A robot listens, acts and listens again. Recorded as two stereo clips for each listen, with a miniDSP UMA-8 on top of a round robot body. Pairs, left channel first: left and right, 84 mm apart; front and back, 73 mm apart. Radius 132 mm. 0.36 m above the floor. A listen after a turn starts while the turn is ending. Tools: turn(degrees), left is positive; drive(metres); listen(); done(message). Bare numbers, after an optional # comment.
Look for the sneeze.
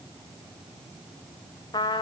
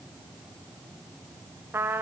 listen()
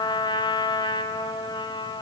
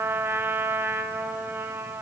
listen()
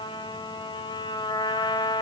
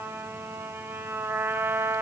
done("I can't make out a sneeze to turn to.")